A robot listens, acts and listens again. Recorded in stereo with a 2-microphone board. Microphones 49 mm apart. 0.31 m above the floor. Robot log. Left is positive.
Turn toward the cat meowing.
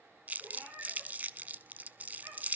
note: The cat meowing: about 70° right or 110° right.
cmd yaw -70
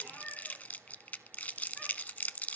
cmd idle
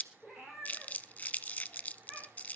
note: So it is at 10° right.
cmd yaw -10
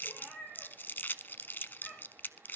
end: Facing the cat meowing.